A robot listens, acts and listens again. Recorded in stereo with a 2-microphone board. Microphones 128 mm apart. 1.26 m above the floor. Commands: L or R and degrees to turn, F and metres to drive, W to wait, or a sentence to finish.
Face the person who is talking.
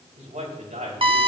R90
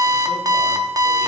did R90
W
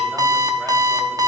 W
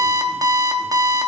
Facing where the man speaking came from. I can't hear it now.